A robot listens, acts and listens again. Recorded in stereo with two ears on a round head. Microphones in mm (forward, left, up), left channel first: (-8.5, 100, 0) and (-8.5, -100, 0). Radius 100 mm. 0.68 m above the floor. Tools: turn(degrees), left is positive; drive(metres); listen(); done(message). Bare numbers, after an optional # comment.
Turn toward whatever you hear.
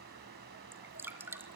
turn(-30)
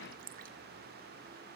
# So it is at 140° right.
turn(-140)
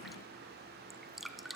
done("Facing the dripping.")